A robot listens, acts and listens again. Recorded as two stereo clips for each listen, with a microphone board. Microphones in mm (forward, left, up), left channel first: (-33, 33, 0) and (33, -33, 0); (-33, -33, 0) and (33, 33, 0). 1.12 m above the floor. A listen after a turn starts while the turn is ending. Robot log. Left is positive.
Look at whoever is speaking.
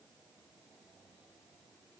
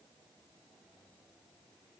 cmd idle
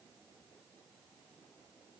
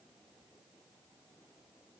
cmd idle
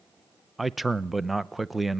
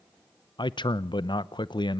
note: The man speaking: 135° right.
cmd yaw -135
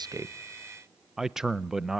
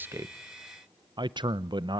note: The man speaking is now 40° left.
cmd yaw +40
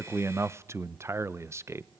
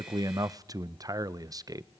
note: The man speaking is now 10° left.
cmd yaw +10
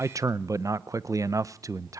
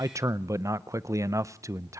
end: Facing the man speaking, under 1 m away.